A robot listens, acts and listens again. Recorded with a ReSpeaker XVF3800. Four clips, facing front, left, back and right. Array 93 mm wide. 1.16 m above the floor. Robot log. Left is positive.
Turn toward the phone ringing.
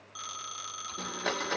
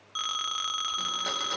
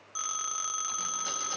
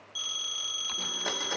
note: The phone ringing: 110° left.
cmd yaw +110
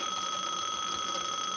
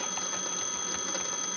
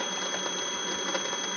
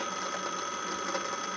note: The phone ringing is now 35° right.
cmd yaw -35
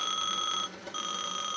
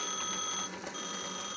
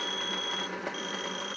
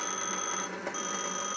note: The phone ringing is now 20° right.
cmd yaw -20
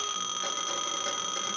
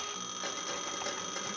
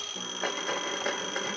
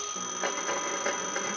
end: Facing the phone ringing.